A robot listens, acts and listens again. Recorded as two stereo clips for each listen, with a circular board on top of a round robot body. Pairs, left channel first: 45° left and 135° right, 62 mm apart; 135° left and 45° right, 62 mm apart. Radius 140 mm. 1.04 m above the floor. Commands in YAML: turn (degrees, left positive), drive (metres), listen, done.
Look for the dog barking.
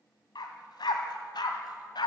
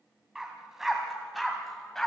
turn: 50
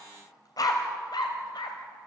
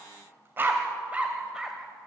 turn: 40
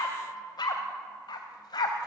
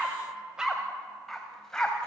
turn: 55
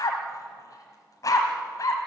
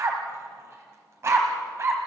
done: "Found it: a dog barking, straight ahead."